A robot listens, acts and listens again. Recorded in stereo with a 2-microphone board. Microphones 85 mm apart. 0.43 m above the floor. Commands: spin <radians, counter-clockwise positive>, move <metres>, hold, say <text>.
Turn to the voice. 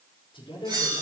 spin 1.57
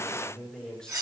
say Found it: a man speaking, straight ahead.